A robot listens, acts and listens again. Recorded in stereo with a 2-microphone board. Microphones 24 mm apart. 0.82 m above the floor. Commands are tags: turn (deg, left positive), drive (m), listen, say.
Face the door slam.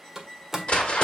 <turn deg="-30"/>
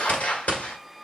<listen/>
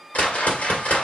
<say>I heard a door slam, but can't make it out now. It was about 15° left or 135° right.</say>